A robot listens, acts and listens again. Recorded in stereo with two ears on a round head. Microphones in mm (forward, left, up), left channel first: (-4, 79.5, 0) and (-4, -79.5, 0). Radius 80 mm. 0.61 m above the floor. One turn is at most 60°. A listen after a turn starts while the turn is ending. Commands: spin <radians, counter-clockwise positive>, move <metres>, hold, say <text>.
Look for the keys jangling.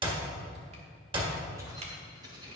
spin -0.44
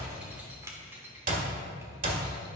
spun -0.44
spin -0.26
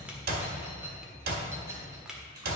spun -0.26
spin -0.35
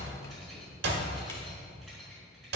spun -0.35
say Found it: keys jangling, straight ahead.